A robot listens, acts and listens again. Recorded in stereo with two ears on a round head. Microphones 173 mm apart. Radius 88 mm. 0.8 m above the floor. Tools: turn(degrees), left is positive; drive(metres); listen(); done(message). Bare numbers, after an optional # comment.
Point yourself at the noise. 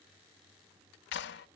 # The clap: about 65° left or 115° left.
turn(65)
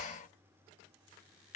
# So it is at 40° left.
turn(40)
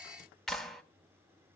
done("Found it: a clap, straight ahead.")